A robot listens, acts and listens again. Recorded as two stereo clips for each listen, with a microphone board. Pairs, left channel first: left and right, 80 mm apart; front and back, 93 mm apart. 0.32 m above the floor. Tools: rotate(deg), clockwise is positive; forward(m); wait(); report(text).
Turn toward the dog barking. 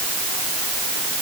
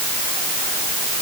wait()
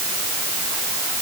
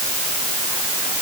wait()
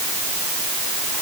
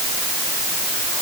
report("I can't make out a dog barking to turn to.")